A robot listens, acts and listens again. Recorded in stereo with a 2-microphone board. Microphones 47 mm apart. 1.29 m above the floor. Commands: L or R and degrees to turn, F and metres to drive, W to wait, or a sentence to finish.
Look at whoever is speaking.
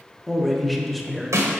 L30
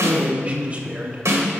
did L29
R25
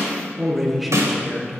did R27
Found it: a man speaking, straight ahead.